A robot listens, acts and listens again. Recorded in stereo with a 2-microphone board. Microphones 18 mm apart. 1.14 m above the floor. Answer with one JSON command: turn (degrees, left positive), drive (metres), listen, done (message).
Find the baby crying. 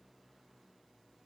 {"listen": true}
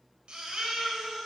{"turn": -60}
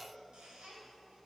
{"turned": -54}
{"listen": true}
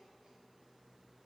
{"listen": true}
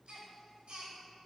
{"turn": -65}
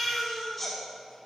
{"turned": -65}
{"done": "Facing the baby crying."}